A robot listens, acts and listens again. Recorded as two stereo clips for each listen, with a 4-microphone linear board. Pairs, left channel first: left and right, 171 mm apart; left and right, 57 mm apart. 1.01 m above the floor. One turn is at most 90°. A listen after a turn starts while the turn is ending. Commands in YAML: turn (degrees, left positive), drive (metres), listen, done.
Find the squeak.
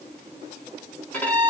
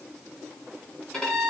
listen: true
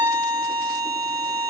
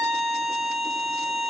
listen: true
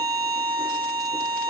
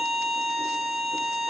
done: "I can't make out a squeak, only a violin."